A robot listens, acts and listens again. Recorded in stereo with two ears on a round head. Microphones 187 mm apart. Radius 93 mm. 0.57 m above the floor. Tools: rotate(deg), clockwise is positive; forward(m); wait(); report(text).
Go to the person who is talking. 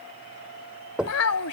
rotate(-90)
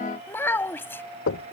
rotate(-10)
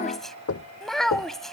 forward(1.0)
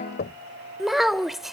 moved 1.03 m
forward(1.0)
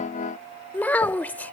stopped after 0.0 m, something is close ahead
rotate(-10)
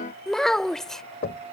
report("Arrived at the child speaking, straight ahead.")